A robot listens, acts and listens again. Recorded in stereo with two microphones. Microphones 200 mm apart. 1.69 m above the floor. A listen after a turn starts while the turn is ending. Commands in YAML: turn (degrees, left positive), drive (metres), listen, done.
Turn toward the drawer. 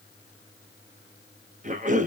listen: true
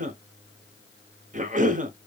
listen: true
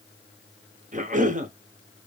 done: "I can't make out a drawer to turn to."